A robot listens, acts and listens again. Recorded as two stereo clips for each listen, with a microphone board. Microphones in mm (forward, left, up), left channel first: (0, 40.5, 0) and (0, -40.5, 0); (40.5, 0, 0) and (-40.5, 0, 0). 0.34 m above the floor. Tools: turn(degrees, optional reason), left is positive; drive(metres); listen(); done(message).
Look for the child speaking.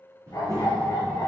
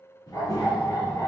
turn(degrees=-45, reason="The child speaking: 45° right.")
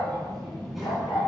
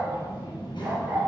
done("Facing the child speaking, 2 to 4 m away.")